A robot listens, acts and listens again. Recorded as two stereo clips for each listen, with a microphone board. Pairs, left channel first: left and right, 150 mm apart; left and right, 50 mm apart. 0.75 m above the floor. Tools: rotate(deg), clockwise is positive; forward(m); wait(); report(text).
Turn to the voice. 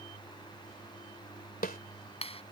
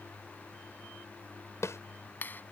wait()
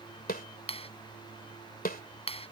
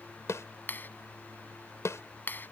wait()
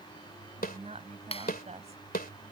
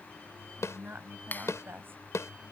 rotate(50)
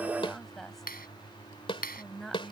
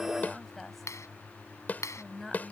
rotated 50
report("Found it: a woman speaking, straight ahead.")